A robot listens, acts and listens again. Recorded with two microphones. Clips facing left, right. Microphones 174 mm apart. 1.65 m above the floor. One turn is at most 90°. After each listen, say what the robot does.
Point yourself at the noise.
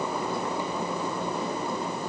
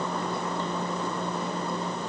Keep listening.
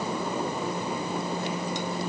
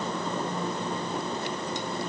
Keep listening.
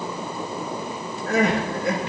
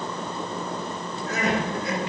Turn 60° left.
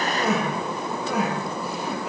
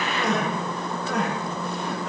Facing the crying.